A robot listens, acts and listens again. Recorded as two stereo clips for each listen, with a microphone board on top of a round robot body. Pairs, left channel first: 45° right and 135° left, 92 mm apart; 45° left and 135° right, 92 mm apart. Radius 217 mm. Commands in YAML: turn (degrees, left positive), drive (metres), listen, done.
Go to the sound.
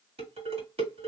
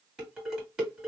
turn: 140
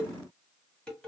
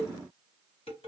turn: 35
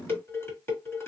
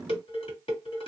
turn: 20
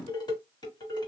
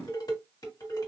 drive: 1.0
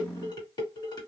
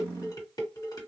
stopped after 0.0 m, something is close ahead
done: "Something is in my way. I am facing the dishes clattering but have not reached it."